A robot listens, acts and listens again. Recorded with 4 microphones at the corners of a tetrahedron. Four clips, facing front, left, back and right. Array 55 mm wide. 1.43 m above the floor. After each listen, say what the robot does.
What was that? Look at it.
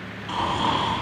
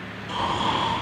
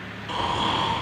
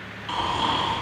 Turn 60° right.
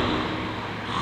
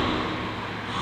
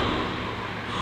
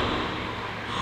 Facing the snoring.